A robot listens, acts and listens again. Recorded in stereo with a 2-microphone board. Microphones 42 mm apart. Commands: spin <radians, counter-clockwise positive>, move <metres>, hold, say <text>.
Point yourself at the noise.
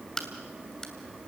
spin 0.52
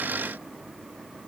hold
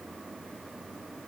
say I heard a crack, but can't make it out now. It was about 15° right or 135° left.